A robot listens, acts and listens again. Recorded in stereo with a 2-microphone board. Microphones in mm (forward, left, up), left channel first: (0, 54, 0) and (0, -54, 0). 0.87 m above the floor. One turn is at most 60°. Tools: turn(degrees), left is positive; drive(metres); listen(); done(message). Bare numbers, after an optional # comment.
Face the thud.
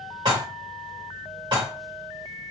listen()
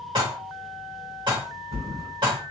turn(-60)
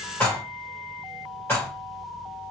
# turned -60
# Nothing new. It was at 30° right.
turn(-30)
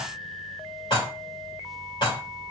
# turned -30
done("I heard a thud from this way, but can't make it out now.")